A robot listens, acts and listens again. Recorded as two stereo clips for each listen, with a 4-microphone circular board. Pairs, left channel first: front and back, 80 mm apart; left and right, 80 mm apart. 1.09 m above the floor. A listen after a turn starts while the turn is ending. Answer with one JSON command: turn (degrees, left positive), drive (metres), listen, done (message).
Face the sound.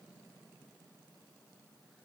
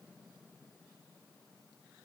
{"listen": true}
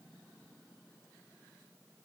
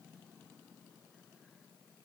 {"listen": true}
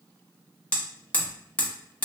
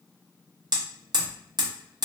{"turn": -70}
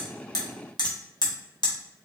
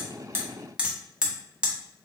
{"turn": -15}
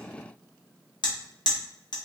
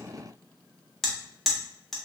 {"done": "Found it: hammering, straight ahead, under 1 m away."}